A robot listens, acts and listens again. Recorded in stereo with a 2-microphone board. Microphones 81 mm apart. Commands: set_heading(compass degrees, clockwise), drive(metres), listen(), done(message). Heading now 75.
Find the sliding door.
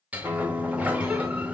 set_heading(90)
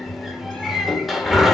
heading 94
done("Facing the sliding door.")